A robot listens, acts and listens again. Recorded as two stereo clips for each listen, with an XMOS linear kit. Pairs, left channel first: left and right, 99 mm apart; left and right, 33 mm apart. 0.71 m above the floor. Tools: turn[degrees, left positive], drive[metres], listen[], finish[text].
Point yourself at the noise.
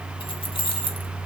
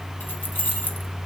Thought: The keys jangling: about 60° left or 120° left.
Action: turn[60]
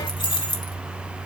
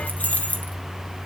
Thought: So it is at 50° left.
Action: turn[50]
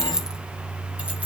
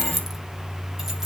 Thought: The keys jangling is now 15° right.
Action: turn[-15]
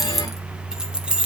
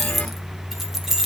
Thought: The keys jangling is now 10° right.
Action: turn[-10]
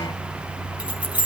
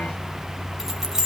Thought: The keys jangling is now 15° right.
Action: turn[-15]
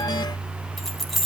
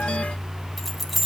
Action: finish[Found it: keys jangling, straight ahead.]